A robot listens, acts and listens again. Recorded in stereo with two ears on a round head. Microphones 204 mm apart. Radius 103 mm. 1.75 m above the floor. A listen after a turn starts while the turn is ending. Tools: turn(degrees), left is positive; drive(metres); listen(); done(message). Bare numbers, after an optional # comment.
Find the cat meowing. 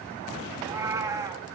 # The cat meowing: about 15° right or 165° right.
turn(-15)
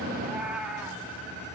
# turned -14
turn(-30)
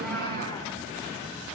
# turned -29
listen()
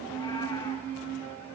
listen()
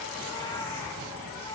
done("I heard a cat meowing, but can't make it out now. It was about 25° left or 145° right.")